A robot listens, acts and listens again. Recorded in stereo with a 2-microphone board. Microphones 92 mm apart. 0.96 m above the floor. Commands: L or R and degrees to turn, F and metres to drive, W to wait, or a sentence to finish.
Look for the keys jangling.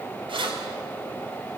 R70
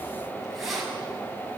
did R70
Found it: keys jangling, straight ahead, over 4 m away.